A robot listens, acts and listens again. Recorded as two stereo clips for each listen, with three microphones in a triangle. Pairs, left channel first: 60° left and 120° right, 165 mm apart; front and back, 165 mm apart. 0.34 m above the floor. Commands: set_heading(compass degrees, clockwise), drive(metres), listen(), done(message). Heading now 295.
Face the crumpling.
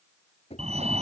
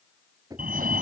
listen()
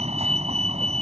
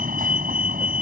listen()
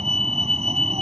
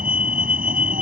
done("I can't make out crumpling to turn to.")